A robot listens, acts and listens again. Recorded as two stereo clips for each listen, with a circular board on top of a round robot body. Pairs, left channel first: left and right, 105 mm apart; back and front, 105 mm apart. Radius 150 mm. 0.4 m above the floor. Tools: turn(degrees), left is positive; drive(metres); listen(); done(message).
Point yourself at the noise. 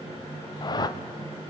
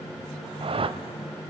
turn(degrees=35)
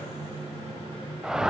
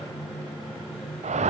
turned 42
done("Found it: a whoosh, straight ahead, under 1 m away.")